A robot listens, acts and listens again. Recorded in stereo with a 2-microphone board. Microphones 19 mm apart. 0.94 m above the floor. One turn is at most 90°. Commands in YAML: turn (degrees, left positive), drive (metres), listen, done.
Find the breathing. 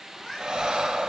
turn: -50
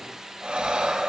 turn: -80
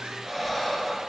done: "Found it: breathing, straight ahead."